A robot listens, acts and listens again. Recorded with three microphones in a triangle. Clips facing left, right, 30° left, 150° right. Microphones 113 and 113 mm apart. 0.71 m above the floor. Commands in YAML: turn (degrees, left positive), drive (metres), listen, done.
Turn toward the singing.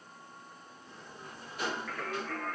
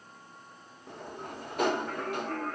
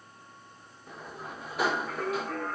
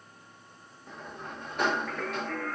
turn: -35
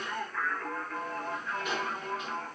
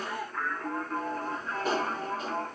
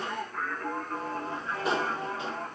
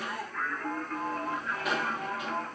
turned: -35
turn: -35
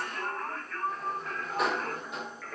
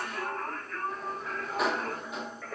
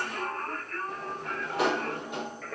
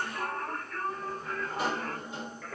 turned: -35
turn: -10
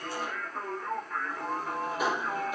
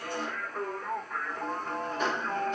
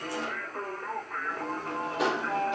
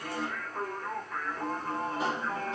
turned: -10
done: "Facing the singing."